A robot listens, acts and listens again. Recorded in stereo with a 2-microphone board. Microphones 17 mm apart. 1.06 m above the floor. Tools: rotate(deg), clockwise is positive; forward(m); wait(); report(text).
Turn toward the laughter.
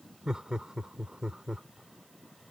rotate(45)
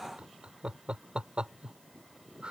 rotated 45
rotate(90)
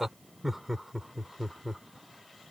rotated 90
rotate(15)
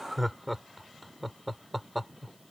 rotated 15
report("Found it: laughter, straight ahead.")